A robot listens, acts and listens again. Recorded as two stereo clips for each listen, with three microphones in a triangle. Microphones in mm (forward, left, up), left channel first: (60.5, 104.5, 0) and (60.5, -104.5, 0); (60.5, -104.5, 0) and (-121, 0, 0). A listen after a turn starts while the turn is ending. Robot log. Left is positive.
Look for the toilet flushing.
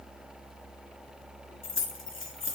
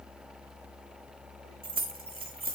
cmd idle
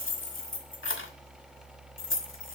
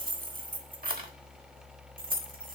cmd idle
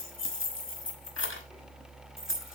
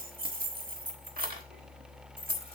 end: I can't make out a toilet flushing to turn to.